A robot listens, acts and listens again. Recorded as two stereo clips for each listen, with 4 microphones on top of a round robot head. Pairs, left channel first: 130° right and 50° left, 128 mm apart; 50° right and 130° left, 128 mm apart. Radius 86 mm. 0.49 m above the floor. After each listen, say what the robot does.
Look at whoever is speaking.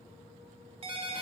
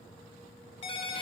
Keep listening.
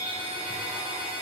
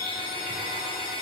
Keep listening.
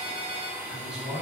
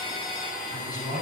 Turn 35° right.
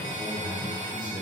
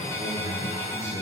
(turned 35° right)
Turn 10° right.
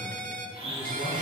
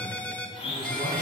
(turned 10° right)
Keep listening.
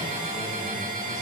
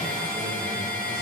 Keep listening.
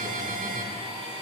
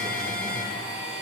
Facing where the man speaking came from. I can't hear it now.